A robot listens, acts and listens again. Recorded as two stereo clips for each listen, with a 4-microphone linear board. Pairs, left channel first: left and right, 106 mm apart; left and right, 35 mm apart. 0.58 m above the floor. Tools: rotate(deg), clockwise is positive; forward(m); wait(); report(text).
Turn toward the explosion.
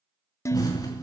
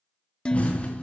rotate(-40)
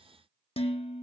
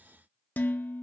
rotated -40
wait()
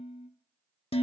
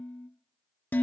report("I heard an explosion, but can't make it out now. It was about straight ahead or 100° left.")